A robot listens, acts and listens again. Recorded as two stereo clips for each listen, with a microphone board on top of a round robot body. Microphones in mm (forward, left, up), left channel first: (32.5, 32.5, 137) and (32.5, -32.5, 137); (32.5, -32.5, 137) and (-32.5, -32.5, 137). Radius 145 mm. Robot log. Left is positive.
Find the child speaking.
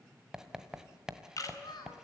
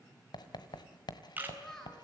note: The child speaking: 85° left.
cmd yaw +85
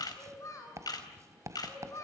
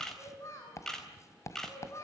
note: The child speaking is now 50° left.
cmd yaw +50
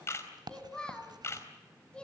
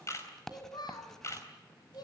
note: The child speaking is now 15° left.
cmd yaw +15
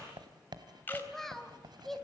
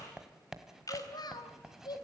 end: Facing the child speaking.